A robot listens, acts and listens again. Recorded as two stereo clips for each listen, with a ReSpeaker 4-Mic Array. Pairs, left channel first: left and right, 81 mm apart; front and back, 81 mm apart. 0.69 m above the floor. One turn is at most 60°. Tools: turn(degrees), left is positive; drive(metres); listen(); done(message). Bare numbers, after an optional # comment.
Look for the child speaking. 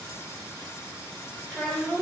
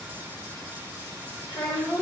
# The child speaking: 10° left.
turn(10)
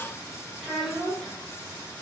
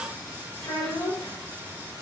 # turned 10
done("Found it: a child speaking, straight ahead.")